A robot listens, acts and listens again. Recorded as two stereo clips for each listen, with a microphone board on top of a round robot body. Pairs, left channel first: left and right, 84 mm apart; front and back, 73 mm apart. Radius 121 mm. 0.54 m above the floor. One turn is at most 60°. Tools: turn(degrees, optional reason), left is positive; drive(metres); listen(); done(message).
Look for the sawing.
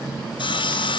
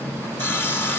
turn(degrees=60, reason="The sawing: 65° left.")
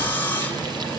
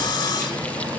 turn(degrees=25, reason="The sawing is now 25° left.")
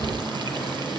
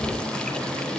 listen()
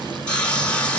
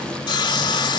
turn(degrees=15, reason="The sawing is now 15° left.")
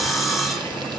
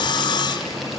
done("Facing the sawing.")